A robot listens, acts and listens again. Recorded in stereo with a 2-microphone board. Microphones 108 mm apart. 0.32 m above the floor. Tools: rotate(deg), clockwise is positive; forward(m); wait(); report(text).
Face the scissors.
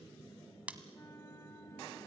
rotate(30)
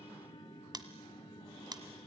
rotate(135)
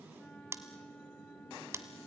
rotate(25)
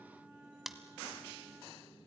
report("Found it: scissors, straight ahead, 1 to 2 m away.")